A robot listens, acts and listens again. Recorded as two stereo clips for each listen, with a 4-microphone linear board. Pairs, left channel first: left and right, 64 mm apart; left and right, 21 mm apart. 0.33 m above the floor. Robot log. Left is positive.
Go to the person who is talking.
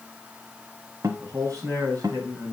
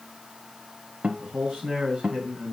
note: The man speaking: about 55° right or 125° right.
cmd yaw -55
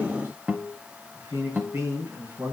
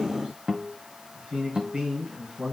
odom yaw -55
note: So it is at 60° right.
cmd yaw -60
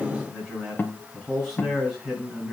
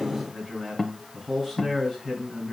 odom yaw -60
note: The man speaking is now 10° right.
cmd yaw -10
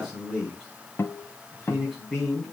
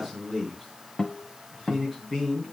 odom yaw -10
cmd fwd 1.0
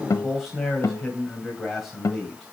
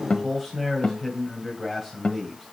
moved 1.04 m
cmd fwd 1.0
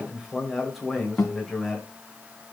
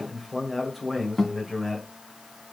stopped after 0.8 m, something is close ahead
end: I am next to the man speaking.